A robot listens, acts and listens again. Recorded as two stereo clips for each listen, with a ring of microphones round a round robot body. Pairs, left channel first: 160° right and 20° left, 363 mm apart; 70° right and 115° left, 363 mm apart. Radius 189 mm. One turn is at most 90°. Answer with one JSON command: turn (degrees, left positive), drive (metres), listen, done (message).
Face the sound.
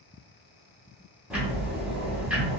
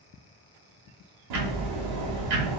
{"turn": 90}
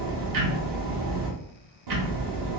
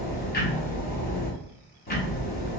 {"done": "Found it: ticking, straight ahead, 1 to 2 m away."}